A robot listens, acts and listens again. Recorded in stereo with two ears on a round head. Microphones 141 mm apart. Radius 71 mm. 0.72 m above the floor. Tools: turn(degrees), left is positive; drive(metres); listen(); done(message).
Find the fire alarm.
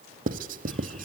listen()
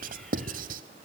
listen()
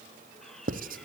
done("I can't make out a fire alarm to turn to.")